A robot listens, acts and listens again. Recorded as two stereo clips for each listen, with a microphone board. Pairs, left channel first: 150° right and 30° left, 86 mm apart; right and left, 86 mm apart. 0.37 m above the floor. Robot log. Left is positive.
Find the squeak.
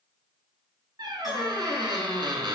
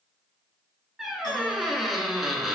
end: Found it: a squeak, straight ahead.